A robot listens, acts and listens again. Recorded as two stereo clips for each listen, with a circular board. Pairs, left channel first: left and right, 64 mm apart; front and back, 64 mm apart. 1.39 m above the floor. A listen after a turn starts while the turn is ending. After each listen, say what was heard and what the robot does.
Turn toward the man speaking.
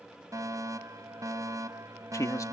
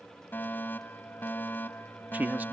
The man speaking: 120° left. Turn 120° left.
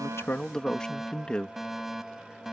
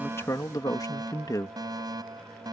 The man speaking is now 15° left. Turn 15° left.
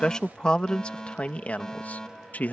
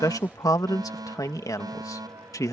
The man speaking is now 25° left. Turn 25° left.
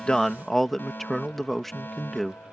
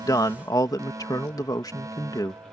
Facing the man speaking.